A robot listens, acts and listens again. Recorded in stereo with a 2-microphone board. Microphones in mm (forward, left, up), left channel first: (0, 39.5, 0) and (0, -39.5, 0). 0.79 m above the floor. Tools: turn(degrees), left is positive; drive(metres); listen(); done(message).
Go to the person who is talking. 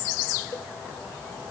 listen()
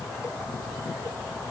listen()
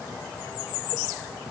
done("I can't make out anyone speaking.")